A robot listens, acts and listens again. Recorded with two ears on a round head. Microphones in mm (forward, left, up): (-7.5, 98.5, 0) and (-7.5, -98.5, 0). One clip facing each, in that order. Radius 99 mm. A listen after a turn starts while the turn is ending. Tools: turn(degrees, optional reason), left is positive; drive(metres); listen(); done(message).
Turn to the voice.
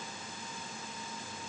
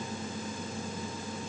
listen()
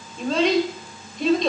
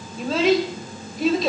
turn(degrees=-30)
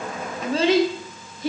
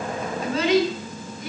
turn(degrees=25, reason="So it is at 25° left.")
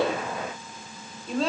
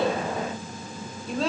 done("Found it: a child speaking, straight ahead, 1 to 2 m away.")